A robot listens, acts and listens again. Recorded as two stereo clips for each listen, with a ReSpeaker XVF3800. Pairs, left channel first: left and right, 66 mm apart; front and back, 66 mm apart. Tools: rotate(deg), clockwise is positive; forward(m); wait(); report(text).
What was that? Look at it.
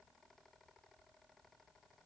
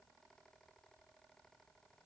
wait()
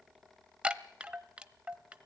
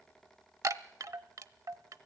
rotate(160)
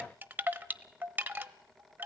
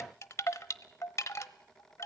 rotate(35)
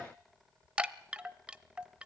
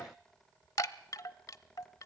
rotate(20)
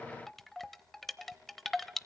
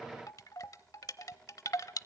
report("Found it: a chime, straight ahead.")